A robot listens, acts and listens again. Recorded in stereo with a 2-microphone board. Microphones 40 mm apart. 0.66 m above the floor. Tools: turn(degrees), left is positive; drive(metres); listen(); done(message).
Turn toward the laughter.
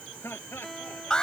turn(degrees=90)
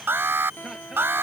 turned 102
turn(degrees=-10)
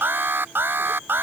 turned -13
listen()
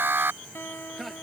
done("Facing the laughter.")